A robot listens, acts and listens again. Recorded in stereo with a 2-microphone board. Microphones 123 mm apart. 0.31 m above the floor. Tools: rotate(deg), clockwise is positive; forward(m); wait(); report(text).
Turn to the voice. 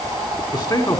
rotate(-35)
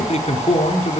rotate(-105)
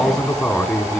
report("Facing the man speaking.")